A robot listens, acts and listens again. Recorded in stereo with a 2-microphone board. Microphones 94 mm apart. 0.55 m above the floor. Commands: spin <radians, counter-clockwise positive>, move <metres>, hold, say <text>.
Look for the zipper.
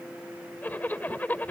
spin 0.35
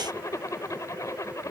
spin 2.44
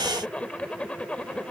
spin 0.26
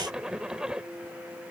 spin -0.17
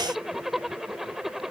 say Facing the zipper.